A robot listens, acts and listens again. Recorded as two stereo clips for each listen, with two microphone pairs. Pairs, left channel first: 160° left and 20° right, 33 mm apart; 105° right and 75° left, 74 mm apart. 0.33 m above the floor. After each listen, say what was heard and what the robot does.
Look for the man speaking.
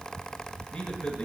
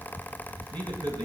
The man speaking: 90° left. Turn 90° left.
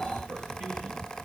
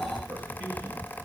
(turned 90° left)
Found it: a man speaking, straight ahead, over 4 m away.